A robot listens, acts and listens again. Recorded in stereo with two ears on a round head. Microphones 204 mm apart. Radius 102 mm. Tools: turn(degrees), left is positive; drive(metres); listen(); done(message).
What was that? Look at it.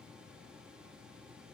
listen()
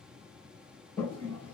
turn(degrees=30)
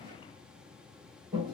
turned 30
turn(degrees=-20)
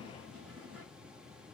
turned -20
done("Facing the toilet flushing.")